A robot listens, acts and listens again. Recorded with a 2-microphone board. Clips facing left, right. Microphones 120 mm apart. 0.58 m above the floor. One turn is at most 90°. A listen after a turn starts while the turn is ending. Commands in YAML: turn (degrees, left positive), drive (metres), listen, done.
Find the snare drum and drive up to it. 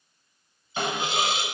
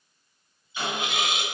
turn: 55
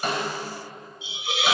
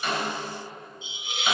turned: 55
listen: true
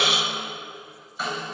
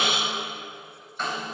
drive: 1.0
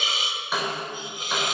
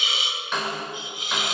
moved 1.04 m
drive: 1.0
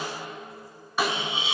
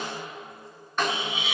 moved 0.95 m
turn: 10
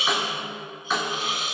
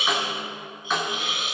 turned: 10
drive: 1.0
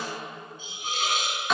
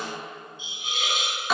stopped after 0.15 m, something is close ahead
done: "I am next to the snare drum."